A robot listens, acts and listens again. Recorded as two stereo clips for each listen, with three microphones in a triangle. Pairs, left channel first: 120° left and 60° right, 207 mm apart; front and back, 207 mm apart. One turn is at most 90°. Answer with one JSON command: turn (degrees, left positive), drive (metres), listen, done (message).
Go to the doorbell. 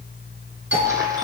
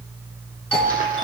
{"turn": -85}
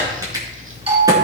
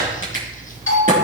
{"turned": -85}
{"drive": 1.0}
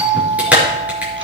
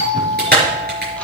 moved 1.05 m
{"drive": 1.0}
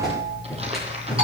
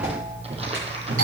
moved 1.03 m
{"drive": 1.0}
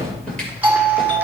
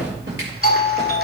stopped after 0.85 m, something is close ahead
{"done": "I am next to the doorbell."}